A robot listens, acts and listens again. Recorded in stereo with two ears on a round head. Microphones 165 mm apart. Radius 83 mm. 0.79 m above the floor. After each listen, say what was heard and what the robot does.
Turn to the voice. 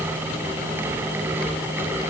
Keep listening.
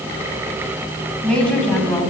Turn 30° left.
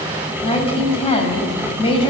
So it is at 150° left. Turn 150° left.
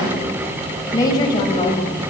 The woman speaking is now 20° left. Turn 20° left.
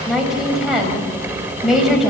Facing the woman speaking, over 4 m away.